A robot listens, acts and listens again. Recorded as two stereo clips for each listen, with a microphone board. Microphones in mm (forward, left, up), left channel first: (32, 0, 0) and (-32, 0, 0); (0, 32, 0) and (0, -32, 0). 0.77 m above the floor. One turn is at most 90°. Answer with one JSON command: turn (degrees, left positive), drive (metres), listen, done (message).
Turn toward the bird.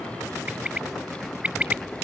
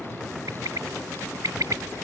{"turn": -90}
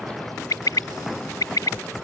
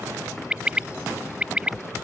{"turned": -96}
{"turn": -15}
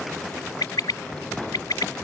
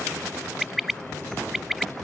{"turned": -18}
{"done": "Found it: a bird, straight ahead."}